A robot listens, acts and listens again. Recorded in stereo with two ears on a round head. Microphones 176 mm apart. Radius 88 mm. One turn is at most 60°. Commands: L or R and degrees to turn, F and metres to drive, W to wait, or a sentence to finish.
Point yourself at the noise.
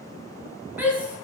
R30
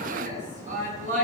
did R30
R60
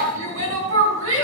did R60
R60
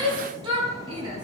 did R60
R25
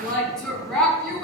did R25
Facing the shout, over 4 m away.